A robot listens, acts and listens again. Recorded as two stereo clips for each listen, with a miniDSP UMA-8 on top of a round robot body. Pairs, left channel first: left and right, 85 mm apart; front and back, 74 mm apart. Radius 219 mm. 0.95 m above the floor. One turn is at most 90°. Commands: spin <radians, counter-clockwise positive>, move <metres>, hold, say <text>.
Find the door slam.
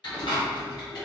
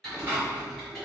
spin 1.57
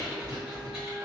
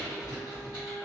spin 0.44
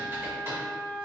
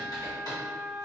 say I heard a door slam from this way, but can't make it out now.